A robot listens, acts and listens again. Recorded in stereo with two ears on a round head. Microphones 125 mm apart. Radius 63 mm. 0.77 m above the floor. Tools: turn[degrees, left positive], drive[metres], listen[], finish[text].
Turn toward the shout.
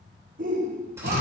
Thought: The shout: about 65° right or 115° right.
Action: turn[-65]
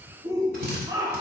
Thought: So it is at 25° right.
Action: turn[-25]
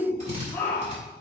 Thought: The shout is now 20° left.
Action: turn[20]
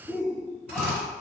Action: finish[Facing the shout, 1 to 2 m away.]